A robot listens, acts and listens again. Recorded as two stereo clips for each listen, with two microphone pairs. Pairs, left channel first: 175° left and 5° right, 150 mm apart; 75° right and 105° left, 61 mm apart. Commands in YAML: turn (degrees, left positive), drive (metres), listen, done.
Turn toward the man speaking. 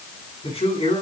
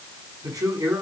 turn: 125
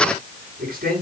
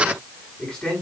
done: "Facing the man speaking, over 4 m away."